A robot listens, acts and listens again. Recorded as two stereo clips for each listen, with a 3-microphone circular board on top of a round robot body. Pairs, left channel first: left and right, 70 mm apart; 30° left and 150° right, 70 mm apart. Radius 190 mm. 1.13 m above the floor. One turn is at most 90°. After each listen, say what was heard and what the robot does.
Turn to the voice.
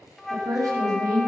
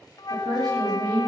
The woman speaking: 125° right. Turn 90° right.
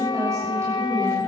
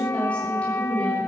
The woman speaking is now 40° right. Turn 40° right.
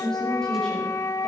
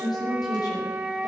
The woman speaking is now 10° left. Turn 10° left.
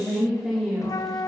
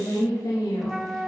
Found it: a woman speaking, straight ahead.